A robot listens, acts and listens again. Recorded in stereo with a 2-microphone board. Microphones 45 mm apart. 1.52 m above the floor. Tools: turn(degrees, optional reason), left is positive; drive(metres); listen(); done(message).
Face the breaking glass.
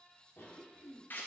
listen()
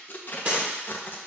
turn(degrees=-25, reason="The breaking glass: about 25° right or 155° right.")
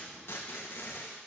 listen()
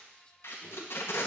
done("I heard breaking glass, but can't make it out now. It was about straight ahead or 130° right.")